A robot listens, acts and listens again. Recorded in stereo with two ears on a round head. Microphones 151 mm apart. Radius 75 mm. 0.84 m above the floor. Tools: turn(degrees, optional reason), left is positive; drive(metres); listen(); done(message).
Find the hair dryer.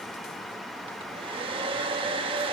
turn(degrees=-35, reason="The hair dryer: about 35° right or 145° right.")
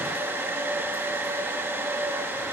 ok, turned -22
turn(degrees=-15, reason="So it is at 15° right.")
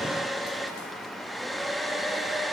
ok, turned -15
done("Facing the hair dryer, 1 to 2 m away.")